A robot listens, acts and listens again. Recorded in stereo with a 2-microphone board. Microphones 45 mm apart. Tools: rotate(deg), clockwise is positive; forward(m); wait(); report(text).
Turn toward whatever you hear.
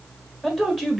rotate(-30)
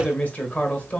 rotate(-145)
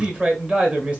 rotate(25)
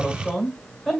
report("Found it: a man speaking, straight ahead, 1 to 2 m away.")